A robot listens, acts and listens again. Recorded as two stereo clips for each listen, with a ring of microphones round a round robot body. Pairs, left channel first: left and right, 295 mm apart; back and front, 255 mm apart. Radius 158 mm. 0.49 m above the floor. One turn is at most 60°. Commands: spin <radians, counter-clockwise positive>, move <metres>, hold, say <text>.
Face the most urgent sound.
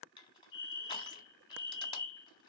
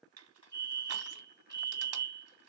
spin 1.05
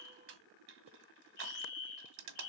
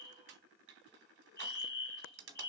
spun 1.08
spin 1.05
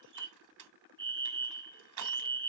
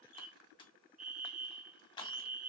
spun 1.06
say Facing the fire alarm, 2 to 4 m away.